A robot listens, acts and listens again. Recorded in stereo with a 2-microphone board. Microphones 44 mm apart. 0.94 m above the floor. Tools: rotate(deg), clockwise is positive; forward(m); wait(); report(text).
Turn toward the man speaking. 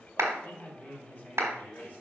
rotate(-40)
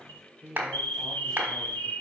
rotate(-10)
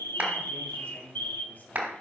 rotate(-35)
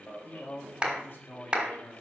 rotate(-55)
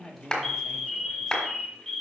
rotate(-15)
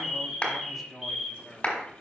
report("Facing the man speaking, 1 to 2 m away.")